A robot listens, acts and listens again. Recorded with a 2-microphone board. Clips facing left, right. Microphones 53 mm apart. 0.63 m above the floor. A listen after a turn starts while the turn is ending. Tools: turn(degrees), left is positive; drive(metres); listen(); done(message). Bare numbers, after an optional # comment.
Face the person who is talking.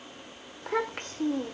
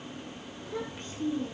# The child speaking: about 65° left or 115° left.
turn(65)
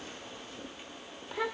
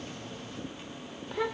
done("Found it: a child speaking, straight ahead.")